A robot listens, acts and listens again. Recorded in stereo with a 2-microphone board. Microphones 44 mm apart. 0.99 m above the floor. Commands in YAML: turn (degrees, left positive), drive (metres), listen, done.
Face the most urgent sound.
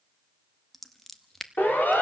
turn: 45
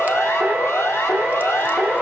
turn: 90
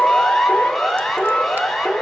done: "Facing the siren."